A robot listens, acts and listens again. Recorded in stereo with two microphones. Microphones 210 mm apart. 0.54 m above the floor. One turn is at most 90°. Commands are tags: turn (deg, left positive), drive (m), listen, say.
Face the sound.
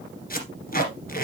<turn deg="40"/>
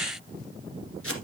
<turn deg="90"/>
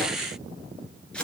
<say>Found it: tape being pulled, straight ahead, 1 to 2 m away.</say>